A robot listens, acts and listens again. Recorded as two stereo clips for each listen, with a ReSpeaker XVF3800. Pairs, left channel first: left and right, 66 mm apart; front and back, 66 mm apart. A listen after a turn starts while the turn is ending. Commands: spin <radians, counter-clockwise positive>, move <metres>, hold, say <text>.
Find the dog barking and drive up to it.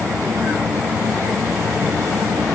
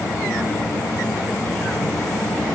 hold
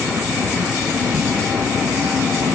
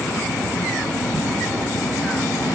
hold
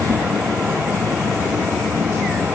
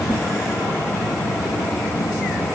say I can't make out a dog barking.